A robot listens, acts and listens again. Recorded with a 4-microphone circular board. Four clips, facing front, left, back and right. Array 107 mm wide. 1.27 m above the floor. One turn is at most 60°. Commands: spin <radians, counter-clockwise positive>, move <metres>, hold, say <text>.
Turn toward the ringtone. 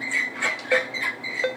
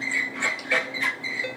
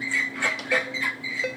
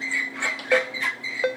spin -1.05
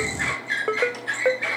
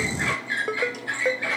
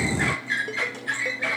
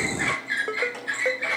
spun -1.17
say Found it: a ringtone, straight ahead.